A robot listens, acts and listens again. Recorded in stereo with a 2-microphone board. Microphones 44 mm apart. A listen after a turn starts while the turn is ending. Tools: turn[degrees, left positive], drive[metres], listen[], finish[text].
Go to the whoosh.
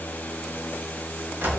Action: listen[]
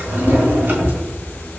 Action: listen[]
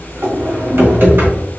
Action: finish[I can't make out a whoosh, only a drawer.]